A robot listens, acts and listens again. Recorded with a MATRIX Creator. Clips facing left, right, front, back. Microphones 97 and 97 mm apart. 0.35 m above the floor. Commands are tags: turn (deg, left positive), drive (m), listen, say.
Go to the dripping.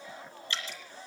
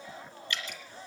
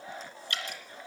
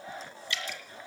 <turn deg="35"/>
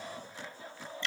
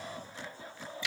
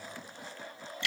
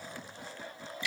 <drive m="1.0"/>
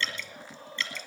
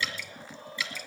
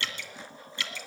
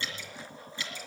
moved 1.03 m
<turn deg="-10"/>
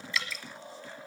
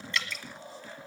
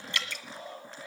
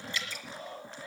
<drive m="1.0"/>
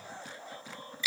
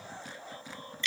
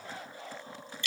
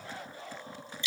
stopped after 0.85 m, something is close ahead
<say>Arrived at the dripping, straight ahead.</say>